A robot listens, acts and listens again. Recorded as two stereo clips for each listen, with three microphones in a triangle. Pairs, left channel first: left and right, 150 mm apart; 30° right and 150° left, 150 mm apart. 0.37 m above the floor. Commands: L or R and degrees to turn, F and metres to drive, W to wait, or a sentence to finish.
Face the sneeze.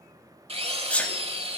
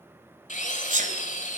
L170
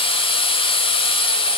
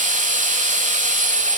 Facing where the sneeze came from. I can't hear it now.